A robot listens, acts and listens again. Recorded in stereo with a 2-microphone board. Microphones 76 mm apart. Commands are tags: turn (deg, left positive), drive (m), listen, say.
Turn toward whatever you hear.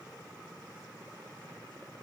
<listen/>
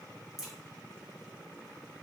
<turn deg="30"/>
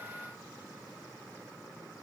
<listen/>
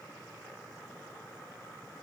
<say>I heard a crack, but can't make it out now. It was about 30° right or 150° left.</say>